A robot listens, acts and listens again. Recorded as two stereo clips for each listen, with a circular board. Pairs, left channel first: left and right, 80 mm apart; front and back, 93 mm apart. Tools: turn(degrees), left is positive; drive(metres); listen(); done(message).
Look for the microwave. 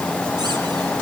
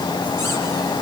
listen()
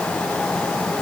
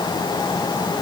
listen()
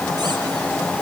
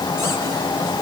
done("I can't make out a microwave.")